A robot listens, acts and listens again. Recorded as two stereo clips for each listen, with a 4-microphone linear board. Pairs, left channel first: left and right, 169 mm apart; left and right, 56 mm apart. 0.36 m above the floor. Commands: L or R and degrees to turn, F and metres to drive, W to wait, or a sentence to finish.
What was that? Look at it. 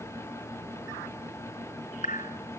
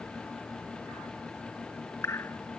L50
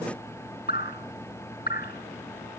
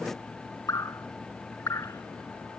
L75
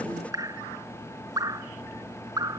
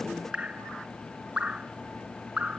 R20
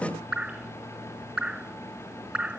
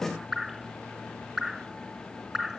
Facing the dripping.